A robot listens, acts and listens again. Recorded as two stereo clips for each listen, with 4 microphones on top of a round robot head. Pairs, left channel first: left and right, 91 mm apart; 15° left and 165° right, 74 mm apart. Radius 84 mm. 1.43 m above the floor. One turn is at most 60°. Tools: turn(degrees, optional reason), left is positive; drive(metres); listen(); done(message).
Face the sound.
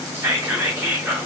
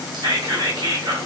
turn(degrees=-60, reason="The whispering: 155° right.")
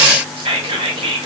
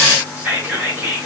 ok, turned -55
turn(degrees=-60, reason="The whispering is now 100° right.")
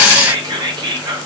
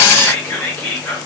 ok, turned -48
turn(degrees=-50, reason="The whispering is now 50° right.")
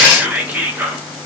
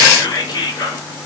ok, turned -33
turn(degrees=-20, reason="The whispering is now 20° right.")
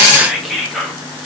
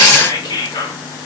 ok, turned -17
done("Facing the whispering.")